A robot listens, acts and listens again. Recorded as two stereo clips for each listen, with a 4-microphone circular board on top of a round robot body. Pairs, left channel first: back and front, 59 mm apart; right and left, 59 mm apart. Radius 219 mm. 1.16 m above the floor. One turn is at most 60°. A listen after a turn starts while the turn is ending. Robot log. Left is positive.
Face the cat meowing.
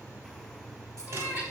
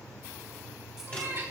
note: The cat meowing: 60° left.
cmd yaw +60
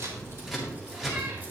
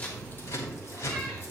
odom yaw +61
cmd idle
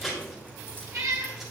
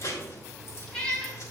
note: The cat meowing is now 15° right.
cmd yaw -15
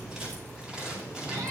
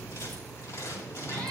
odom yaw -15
cmd idle
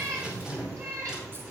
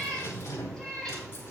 note: The cat meowing is now 10° right.
cmd yaw -10
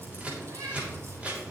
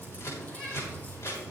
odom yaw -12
end: Facing the cat meowing, over 4 m away.